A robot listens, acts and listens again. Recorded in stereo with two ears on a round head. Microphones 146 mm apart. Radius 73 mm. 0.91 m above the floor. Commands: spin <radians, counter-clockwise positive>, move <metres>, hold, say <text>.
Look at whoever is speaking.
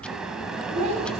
spin -0.70
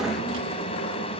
hold
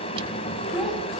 say Found it: a child speaking, straight ahead.